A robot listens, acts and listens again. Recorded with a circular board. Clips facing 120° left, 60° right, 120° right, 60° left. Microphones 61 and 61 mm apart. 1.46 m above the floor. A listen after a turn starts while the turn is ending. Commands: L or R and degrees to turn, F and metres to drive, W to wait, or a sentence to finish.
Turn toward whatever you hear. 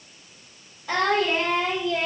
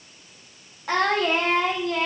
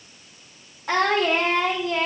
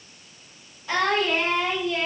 R80
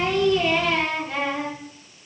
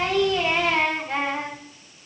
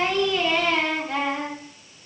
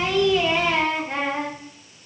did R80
Found it: singing, straight ahead, 2 to 4 m away.